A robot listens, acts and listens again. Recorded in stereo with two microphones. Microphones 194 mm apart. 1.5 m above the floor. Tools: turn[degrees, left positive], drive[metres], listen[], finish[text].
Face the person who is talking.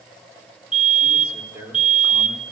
Action: turn[-30]
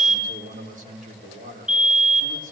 Thought: So it is at 140° right.
Action: turn[-140]
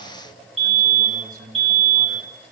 Thought: The man speaking is now 45° right.
Action: turn[-45]
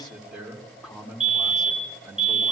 Action: finish[Facing the man speaking.]